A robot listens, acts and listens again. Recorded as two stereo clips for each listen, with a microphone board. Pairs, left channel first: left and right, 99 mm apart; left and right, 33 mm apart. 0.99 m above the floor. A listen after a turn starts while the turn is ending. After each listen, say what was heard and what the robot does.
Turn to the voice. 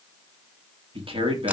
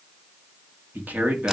The man speaking: about 70° right or 110° right. Turn 70° right.
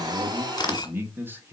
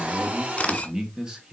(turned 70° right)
So it is at 25° right. Turn 25° right.
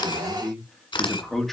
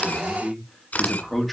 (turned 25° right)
Found it: a man speaking, straight ahead, 2 to 4 m away.